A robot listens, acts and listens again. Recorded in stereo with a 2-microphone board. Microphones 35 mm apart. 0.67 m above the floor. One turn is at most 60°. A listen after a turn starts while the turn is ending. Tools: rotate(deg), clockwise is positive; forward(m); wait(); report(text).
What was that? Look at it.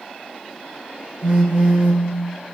rotate(35)
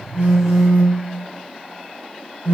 rotate(60)
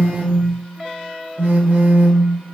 rotate(60)
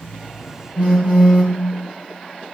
rotate(35)
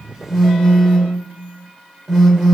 rotate(10)
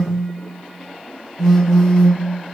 report("Facing the phone buzzing.")